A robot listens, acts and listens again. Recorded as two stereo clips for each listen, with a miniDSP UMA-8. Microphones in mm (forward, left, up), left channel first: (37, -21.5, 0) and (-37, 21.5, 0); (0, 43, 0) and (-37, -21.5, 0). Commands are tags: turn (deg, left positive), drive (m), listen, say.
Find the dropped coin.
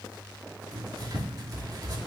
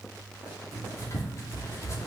<listen/>
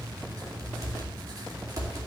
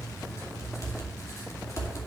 <listen/>
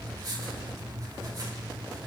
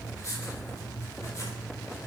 <say>I can't make out a dropped coin to turn to.</say>